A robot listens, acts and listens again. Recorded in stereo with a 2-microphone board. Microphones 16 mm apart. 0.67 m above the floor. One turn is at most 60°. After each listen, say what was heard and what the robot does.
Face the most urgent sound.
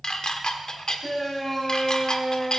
Turn 30° left.
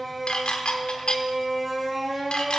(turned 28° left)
So it is at 15° right. Turn 15° right.
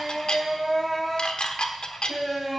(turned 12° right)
Facing the shout, over 4 m away.